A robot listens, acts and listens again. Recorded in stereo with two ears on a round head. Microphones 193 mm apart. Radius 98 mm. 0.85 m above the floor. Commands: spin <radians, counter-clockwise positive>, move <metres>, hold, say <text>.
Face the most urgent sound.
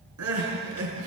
spin -1.57
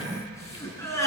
spin 0.26
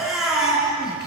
say Facing the crying, over 4 m away.